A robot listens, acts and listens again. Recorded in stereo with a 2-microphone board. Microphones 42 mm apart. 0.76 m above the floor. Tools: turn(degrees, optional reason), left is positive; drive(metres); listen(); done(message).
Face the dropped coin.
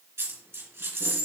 turn(degrees=-70, reason="The dropped coin: about 70° right or 110° right.")
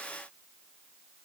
listen()
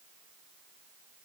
done("I heard a dropped coin, but can't make it out now. It was about straight ahead or 40° right.")